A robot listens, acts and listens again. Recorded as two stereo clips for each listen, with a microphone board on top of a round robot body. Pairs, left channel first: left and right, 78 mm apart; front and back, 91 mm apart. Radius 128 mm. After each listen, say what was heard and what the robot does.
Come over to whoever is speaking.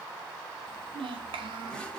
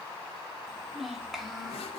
The child speaking: 90° right. Turn 90° right.
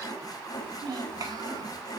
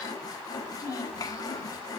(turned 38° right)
The child speaking is now 55° right. Turn 55° right.
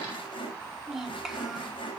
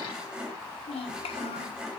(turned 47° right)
Drive 1.0 m forward.
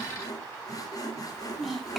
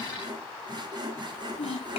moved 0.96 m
Drive 1.0 m forward.
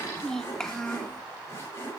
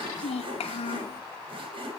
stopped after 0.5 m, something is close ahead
I am next to the child speaking.